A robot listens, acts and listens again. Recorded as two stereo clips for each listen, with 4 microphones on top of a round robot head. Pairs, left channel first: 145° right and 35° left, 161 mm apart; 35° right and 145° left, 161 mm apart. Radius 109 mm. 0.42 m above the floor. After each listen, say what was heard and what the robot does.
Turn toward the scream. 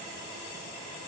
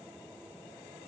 Keep listening.
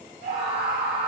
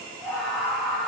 The scream: 50° left. Turn 50° left.
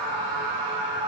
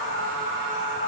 Found it: a scream, straight ahead, 2 to 4 m away.